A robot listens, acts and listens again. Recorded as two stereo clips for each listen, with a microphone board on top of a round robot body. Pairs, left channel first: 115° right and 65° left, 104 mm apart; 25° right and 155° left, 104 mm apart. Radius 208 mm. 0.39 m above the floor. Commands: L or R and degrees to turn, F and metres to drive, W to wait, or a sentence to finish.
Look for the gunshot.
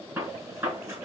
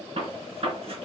L130
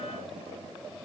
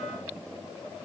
Facing where the gunshot came from. I can't hear it now.